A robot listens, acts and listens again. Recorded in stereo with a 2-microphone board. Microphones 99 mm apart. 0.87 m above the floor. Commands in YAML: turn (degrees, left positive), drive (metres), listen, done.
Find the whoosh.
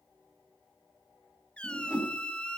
turn: -30
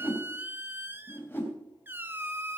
turn: 20
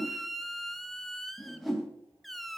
done: "Found it: a whoosh, straight ahead."